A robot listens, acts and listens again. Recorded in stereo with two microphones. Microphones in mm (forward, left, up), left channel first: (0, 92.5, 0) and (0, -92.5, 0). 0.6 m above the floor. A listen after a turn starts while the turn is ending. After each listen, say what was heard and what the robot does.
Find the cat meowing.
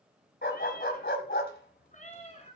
The cat meowing: about 35° left or 145° left. Turn 35° left.
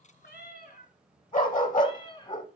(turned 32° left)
The cat meowing: about 25° left or 155° left. Turn 25° left.
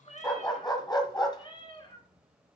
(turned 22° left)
The cat meowing: about 25° left or 155° left. Turn 25° left.
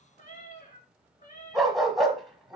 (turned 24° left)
The cat meowing: about 45° left or 135° left. Turn 45° left.
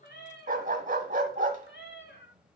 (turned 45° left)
So it is at 100° left. Turn 100° left.
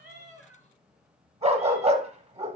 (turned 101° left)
Keep listening.
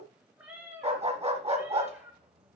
The cat meowing is now 10° right. Turn 10° right.
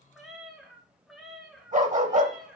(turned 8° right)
Facing the cat meowing, 1 to 2 m away.